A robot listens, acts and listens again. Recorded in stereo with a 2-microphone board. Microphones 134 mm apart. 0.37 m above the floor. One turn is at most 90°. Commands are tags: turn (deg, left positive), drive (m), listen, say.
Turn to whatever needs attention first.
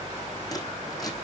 <listen/>
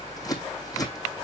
<listen/>
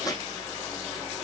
<say>I can't make out anything urgent to turn to.</say>